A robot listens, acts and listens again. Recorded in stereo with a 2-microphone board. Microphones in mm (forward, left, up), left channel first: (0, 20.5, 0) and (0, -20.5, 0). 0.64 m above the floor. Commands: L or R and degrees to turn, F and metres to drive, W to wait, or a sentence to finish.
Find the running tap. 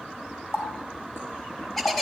L90
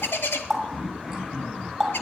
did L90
R10
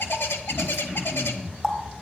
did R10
Found it: a running tap, straight ahead, 2 to 4 m away.